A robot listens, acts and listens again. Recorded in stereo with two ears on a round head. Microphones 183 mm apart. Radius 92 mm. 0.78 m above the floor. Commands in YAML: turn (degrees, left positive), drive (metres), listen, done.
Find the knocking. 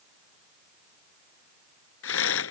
listen: true
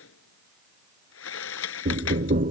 turn: -40
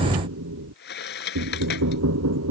turn: -95
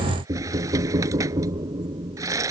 turn: -20
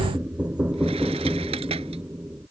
done: "Facing the knocking."